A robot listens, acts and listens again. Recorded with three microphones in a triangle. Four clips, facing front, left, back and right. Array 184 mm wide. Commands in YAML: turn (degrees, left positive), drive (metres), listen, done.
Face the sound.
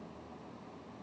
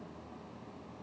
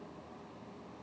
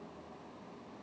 listen: true
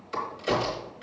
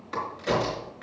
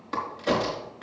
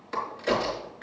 turn: 180
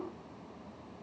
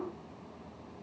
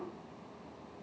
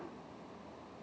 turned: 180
done: "I heard a crack from this way, but can't make it out now."